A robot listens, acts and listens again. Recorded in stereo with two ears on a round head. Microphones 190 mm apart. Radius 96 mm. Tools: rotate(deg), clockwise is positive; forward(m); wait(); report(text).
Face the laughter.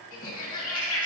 rotate(-75)
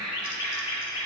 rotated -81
report("Facing the laughter, 2 to 4 m away.")